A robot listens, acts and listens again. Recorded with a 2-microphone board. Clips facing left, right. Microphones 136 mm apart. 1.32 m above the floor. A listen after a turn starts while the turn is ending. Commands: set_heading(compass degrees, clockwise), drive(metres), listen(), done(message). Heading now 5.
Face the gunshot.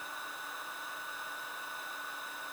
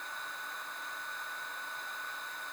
listen()
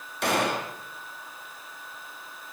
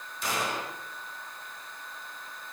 set_heading(295)
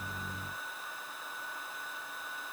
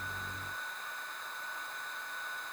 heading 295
listen()
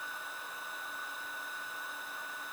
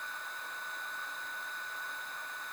done("I heard a gunshot, but can't make it out now. It was about straight ahead or 40° left.")